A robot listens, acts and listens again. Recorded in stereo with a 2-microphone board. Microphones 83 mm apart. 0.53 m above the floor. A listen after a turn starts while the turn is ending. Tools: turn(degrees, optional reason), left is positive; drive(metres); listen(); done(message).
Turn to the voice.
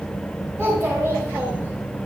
turn(degrees=-25, reason="The child speaking: about 25° right or 155° right.")
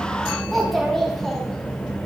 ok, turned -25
done("Found it: a child speaking, straight ahead, 2 to 4 m away.")